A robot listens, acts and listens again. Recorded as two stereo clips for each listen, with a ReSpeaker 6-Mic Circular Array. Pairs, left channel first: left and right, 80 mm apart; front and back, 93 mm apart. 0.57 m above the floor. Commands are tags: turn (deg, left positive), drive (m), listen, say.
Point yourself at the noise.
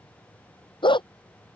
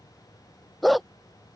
<turn deg="90"/>
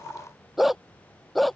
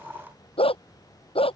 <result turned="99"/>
<say>Found it: a dog barking, straight ahead.</say>